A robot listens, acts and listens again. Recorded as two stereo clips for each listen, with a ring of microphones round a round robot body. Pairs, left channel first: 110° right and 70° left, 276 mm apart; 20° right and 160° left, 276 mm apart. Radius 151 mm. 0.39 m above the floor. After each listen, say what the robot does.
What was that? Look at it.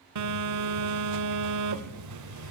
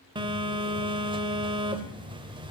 Turn 85° left.
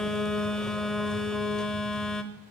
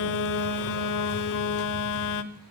Turn 25° right.
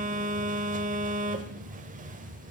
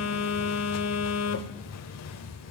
Facing the phone buzzing.